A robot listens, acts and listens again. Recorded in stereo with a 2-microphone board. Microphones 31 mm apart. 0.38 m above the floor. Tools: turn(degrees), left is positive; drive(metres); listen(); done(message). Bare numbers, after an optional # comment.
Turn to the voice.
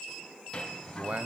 # The man speaking: about 50° right or 130° right.
turn(-50)
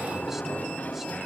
listen()
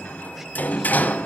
listen()
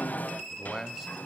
# So it is at 10° right.
turn(-10)
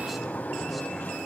listen()
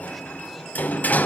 listen()
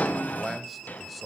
done("Facing the man speaking.")